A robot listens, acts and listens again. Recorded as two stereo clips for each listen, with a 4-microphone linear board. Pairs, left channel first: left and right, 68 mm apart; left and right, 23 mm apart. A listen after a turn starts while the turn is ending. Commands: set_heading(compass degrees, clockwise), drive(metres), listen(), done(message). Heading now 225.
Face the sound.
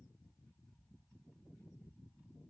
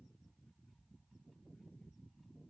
listen()
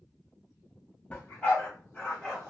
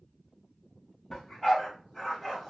set_heading(195)
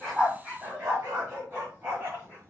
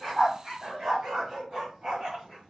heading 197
set_heading(222)
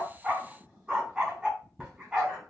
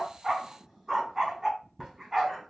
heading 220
done("Facing the dog barking.")